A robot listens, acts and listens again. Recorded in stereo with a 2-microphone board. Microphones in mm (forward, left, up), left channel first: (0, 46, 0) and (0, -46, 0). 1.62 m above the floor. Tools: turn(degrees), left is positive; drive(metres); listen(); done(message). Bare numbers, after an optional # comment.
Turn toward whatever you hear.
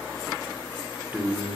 turn(-30)
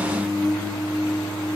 # So it is at 15° left.
turn(15)
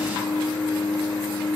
done("Found it: singing, straight ahead, 2 to 4 m away.")